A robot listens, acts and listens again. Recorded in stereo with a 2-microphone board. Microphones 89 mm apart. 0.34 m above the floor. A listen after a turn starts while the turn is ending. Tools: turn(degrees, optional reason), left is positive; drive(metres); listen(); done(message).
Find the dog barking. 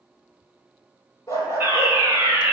turn(degrees=35, reason="The dog barking: about 35° left or 145° left.")
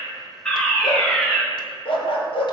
turn(degrees=95, reason="So it is at 95° left.")
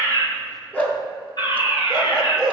turn(degrees=10, reason="The dog barking is now 10° left.")
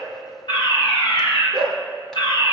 done("Facing the dog barking.")